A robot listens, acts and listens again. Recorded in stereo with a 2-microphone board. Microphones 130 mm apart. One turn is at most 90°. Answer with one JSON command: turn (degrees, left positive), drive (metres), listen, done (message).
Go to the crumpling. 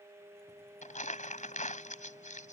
{"turn": 70}
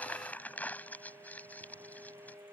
{"turn": 15}
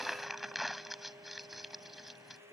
{"drive": 1.0}
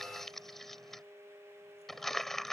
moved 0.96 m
{"drive": 1.0}
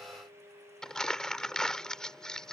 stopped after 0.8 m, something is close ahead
{"done": "Arrived at the crumpling, straight ahead."}